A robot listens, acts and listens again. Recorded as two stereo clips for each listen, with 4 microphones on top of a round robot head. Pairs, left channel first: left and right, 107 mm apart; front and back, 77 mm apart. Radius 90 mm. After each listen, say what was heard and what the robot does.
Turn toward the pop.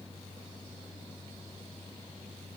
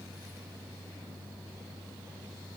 Keep listening.
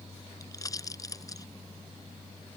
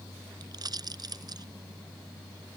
The pop: 150° left. Turn 150° left.
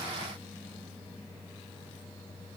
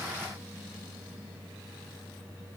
I heard a pop from this way, but can't make it out now.